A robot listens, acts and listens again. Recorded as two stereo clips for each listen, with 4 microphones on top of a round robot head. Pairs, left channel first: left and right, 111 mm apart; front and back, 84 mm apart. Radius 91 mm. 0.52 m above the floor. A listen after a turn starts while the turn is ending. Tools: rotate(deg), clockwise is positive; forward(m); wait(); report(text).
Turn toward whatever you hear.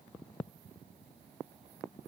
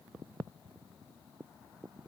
wait()
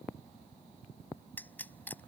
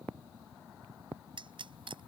rotate(-165)
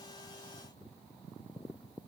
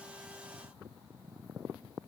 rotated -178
rotate(15)
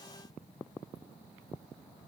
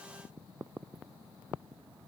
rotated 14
report("Facing where the pop came from. I can't hear it now.")